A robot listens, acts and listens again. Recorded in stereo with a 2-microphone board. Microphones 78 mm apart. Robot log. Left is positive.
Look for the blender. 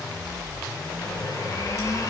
note: The blender: about 45° left or 135° left.
cmd yaw +45
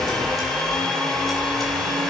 end: Facing the blender, 1 to 2 m away.